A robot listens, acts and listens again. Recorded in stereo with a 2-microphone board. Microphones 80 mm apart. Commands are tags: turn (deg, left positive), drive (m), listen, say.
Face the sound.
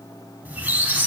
<turn deg="-20"/>
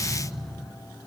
<say>Facing the squeak.</say>